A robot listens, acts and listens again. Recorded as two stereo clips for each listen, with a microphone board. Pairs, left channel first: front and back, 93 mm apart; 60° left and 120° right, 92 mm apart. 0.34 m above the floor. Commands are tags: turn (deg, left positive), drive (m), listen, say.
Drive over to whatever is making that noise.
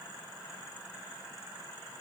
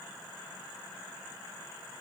<listen/>
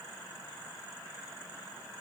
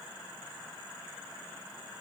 <listen/>
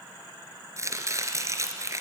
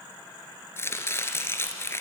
<turn deg="120"/>
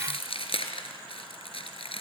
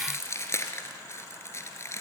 <drive m="1.0"/>
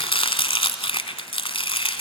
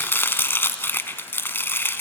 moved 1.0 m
<drive m="1.0"/>
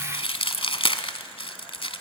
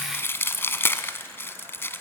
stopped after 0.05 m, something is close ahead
<say>Arrived at the chopping, straight ahead.</say>